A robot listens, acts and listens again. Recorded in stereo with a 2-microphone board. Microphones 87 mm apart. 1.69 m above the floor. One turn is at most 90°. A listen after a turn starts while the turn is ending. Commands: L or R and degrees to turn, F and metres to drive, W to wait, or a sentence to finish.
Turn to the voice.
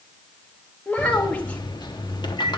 L15
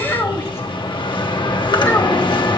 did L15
L90
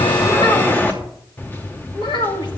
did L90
L75
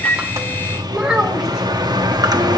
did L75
Facing the child speaking, 1 to 2 m away.